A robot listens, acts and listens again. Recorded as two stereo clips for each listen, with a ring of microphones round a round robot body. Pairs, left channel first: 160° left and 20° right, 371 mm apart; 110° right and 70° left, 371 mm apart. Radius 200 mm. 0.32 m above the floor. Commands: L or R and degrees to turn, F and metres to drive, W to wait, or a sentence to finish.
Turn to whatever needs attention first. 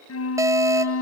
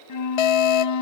R105
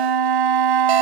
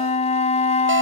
W
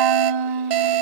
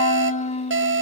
L10
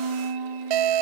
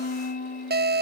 Found it: an alarm, straight ahead.